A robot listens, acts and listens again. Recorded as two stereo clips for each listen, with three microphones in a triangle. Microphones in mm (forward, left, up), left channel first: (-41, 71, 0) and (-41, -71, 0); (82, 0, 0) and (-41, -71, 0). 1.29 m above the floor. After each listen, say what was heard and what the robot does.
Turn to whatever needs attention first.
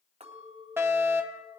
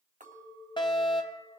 The fire alarm: 20° right. Turn 20° right.
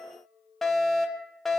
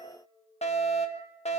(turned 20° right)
Facing the fire alarm, 1 to 2 m away.